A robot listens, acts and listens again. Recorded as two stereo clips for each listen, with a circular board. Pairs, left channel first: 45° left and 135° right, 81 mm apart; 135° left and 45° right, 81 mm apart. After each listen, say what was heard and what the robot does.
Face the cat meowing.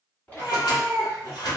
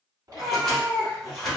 Facing the cat meowing, 1 to 2 m away.